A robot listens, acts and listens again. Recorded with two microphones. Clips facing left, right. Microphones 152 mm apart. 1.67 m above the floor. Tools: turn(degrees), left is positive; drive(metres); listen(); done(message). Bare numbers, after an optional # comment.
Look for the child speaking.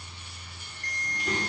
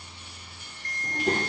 # The child speaking: about 50° right or 130° right.
turn(-50)
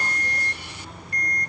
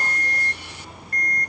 done("Facing the child speaking.")